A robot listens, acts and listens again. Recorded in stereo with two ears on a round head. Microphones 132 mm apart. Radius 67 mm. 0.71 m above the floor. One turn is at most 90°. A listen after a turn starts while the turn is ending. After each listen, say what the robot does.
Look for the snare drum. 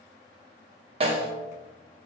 Turn 40° right.
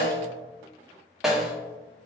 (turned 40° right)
Facing the snare drum, under 1 m away.